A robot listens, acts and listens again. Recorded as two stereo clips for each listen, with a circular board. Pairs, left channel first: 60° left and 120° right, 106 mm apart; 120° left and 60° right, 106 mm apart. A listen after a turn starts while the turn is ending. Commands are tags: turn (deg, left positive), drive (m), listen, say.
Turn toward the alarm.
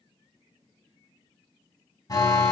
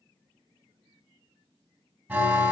<turn deg="10"/>
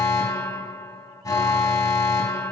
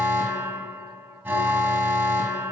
<say>Facing the alarm.</say>